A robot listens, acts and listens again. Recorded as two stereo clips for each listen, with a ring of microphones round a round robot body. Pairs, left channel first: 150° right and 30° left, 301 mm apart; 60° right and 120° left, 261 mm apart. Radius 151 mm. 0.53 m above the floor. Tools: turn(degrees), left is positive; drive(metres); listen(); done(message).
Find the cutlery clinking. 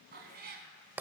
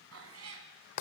listen()
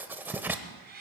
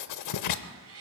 listen()
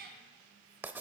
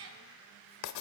done("I can't make out cutlery clinking, only writing and a cat meowing.")